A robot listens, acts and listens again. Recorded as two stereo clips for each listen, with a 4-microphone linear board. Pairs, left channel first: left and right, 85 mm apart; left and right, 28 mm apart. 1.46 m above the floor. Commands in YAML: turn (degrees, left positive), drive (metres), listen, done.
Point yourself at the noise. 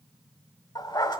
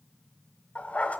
turn: 60
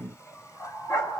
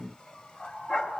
turn: 45
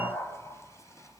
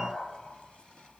turn: 35
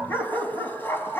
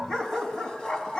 turn: 25
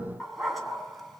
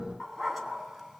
done: "Facing the dog barking."